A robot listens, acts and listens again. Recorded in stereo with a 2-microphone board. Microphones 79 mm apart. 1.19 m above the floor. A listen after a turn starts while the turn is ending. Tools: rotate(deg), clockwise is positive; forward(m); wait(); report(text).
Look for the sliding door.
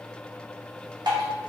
wait()
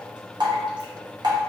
wait()
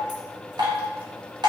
report("I can't make out a sliding door, only dripping.")